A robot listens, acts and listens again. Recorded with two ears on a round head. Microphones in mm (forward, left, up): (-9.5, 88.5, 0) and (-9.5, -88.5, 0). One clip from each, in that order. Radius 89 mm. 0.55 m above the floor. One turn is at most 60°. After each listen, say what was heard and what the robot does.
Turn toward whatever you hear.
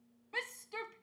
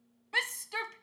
The shout: about 50° right or 130° right. Turn 50° right.
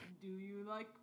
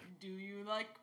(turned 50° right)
So it is at 80° right. Turn 60° right.
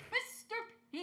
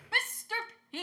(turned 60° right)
The shout is now 40° right. Turn 40° right.
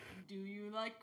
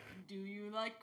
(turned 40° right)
Found it: a shout, straight ahead.